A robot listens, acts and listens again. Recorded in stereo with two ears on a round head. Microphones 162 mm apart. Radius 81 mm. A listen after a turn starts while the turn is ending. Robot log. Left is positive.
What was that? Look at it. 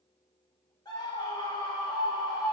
note: The scream: about 25° left or 155° left.
cmd yaw +25
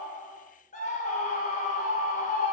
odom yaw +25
note: So it is at 135° left.
cmd yaw +135
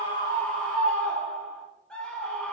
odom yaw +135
end: Facing the scream, 1 to 2 m away.